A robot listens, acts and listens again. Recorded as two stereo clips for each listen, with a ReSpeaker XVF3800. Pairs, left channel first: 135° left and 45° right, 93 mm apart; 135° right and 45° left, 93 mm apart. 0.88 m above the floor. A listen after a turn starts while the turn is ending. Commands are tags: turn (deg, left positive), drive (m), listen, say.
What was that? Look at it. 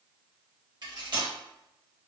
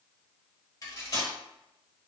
<turn deg="-85"/>
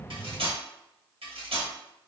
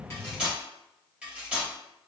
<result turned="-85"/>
<turn deg="-35"/>
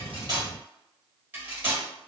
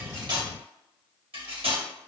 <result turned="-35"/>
<turn deg="20"/>
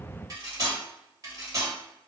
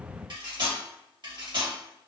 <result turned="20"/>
<say>Facing the cutlery clinking, 1 to 2 m away.</say>